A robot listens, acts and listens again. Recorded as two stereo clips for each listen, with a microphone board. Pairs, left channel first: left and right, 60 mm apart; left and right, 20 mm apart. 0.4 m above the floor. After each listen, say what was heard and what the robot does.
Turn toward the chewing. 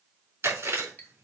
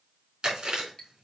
The chewing: about 45° right or 135° right. Turn 45° right.
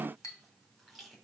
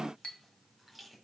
Keep listening.
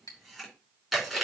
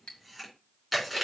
Facing the chewing, over 4 m away.